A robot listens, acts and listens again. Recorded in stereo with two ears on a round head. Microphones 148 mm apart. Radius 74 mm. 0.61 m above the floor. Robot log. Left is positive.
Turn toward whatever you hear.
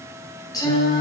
note: The singing: about 25° left or 155° left.
cmd yaw +25
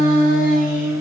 note: So it is at 125° left.
cmd yaw +125
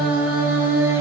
note: The singing is now 15° right.
cmd yaw -15
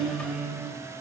end: Facing the singing.